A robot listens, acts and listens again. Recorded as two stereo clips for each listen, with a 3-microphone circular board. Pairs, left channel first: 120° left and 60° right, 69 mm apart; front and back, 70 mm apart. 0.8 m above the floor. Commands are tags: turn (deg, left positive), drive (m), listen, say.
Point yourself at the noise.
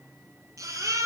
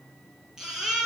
<turn deg="-100"/>
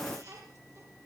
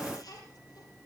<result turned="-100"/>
<listen/>
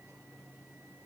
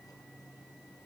<listen/>
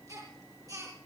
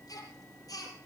<turn deg="-30"/>
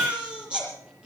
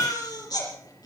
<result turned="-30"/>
<turn deg="15"/>
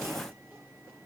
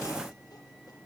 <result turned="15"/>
<listen/>
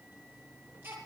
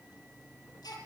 <say>Found it: a baby crying, straight ahead, over 4 m away.</say>